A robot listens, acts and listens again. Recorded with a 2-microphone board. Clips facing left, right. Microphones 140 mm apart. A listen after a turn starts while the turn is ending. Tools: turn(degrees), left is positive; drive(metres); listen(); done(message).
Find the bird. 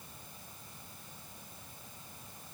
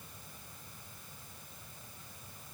listen()
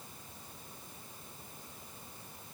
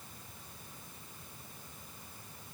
listen()
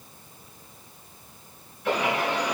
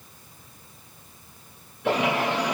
turn(degrees=-90)
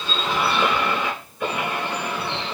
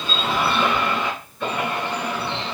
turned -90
turn(degrees=10)
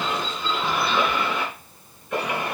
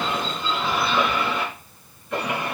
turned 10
done("Found it: a bird, straight ahead.")